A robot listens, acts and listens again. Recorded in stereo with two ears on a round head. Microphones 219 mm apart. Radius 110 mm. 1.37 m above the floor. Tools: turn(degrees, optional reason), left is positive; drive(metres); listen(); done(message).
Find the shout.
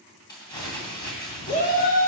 turn(degrees=35, reason="The shout: about 35° left or 145° left.")
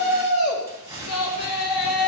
turn(degrees=115, reason="So it is at 115° left.")
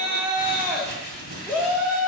done("Facing the shout.")